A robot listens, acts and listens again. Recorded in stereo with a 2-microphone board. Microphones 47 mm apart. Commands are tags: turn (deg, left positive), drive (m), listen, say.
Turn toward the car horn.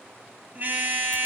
<turn deg="-40"/>
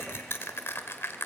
<listen/>
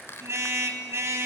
<turn deg="-100"/>
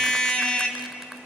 <turn deg="20"/>
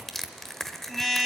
<say>Facing the car horn.</say>